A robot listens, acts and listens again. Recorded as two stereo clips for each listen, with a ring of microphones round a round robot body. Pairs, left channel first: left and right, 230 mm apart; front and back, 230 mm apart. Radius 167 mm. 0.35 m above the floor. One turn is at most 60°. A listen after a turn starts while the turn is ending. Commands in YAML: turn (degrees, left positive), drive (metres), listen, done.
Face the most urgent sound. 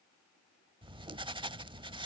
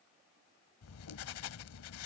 listen: true
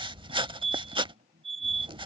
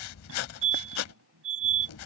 turn: -60
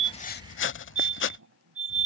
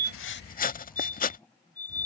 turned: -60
turn: -60
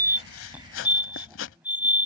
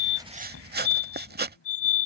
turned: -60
done: "Facing the fire alarm."